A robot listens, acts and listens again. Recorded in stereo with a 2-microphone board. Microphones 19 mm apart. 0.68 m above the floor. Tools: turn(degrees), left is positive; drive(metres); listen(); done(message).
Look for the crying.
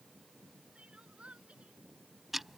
turn(degrees=-90)
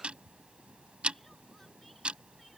listen()
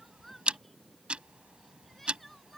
listen()
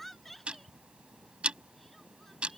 turn(degrees=10)
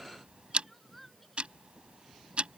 done("Facing the crying.")